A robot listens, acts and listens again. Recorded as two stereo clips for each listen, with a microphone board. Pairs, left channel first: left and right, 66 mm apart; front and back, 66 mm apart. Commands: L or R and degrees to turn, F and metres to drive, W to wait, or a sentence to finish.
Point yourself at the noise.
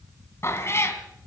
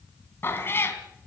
L50
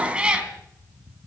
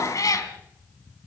R15
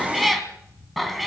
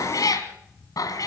Found it: a cat meowing, straight ahead.